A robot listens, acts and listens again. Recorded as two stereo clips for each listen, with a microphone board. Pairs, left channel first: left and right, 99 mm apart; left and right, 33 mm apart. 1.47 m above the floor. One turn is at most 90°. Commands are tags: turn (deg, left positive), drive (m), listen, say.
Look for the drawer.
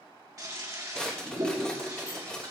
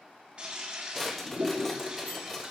<turn deg="30"/>
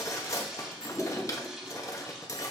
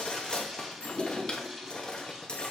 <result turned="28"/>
<turn deg="90"/>
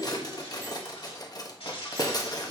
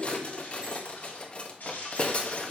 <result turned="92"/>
<turn deg="50"/>
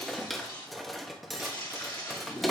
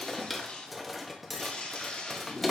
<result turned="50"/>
<say>Found it: a drawer, straight ahead, 1 to 2 m away.</say>